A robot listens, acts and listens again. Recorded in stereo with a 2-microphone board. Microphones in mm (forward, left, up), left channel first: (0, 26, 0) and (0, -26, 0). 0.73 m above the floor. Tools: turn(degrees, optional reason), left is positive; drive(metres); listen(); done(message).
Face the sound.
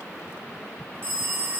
turn(degrees=-45, reason="The phone ringing: about 45° right or 135° right.")
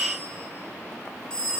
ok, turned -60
turn(degrees=15, reason="So it is at 15° left.")
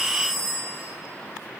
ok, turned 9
done("Found it: a phone ringing, straight ahead.")